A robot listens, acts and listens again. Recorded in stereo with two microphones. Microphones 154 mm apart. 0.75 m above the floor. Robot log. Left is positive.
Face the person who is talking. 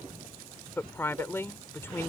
note: The woman speaking: about 15° left or 165° left.
cmd yaw +15
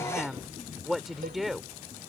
end: Found it: a woman speaking, straight ahead.